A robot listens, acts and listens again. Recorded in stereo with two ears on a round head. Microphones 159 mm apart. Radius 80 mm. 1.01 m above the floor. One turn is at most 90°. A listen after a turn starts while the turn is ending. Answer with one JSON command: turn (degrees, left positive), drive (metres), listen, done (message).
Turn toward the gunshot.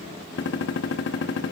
{"turn": 70}
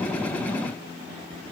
{"listen": true}
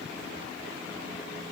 {"done": "I heard a gunshot, but can't make it out now. It was about straight ahead or 40° left."}